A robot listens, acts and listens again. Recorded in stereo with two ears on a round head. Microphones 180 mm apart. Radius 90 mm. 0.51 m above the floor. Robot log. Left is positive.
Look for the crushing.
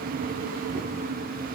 cmd idle
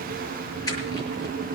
note: The crushing: about 20° left or 160° left.
cmd yaw +20
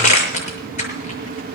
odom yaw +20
note: So it is at 140° left.
cmd yaw +140
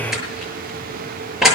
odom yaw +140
end: Facing the crushing.